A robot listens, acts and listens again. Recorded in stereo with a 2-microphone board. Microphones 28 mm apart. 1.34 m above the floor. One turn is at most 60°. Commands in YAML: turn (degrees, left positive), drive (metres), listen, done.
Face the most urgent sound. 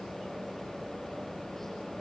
listen: true
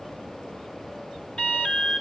turn: 50
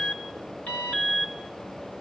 turn: 60
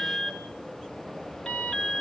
turn: 35
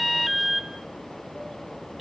turn: -10
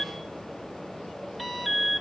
done: "Found it: an alarm, straight ahead, 2 to 4 m away."